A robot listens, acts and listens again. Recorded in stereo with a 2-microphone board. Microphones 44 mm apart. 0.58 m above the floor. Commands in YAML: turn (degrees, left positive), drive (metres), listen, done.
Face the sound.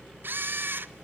turn: -55
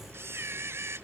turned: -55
turn: -70
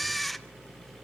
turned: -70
done: "Found it: a camera shutter, straight ahead, under 1 m away."